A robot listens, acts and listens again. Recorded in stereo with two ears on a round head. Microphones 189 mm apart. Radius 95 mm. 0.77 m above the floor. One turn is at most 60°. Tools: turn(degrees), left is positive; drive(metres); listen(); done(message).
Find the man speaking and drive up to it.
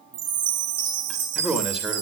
turn(degrees=-30)
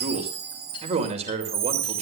turn(degrees=-60)
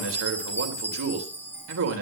turn(degrees=-60)
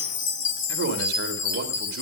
turn(degrees=-55)
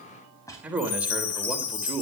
drive(metres=1.0)
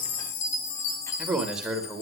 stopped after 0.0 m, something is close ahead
done("Blocked. The man speaking is further on, straight ahead.")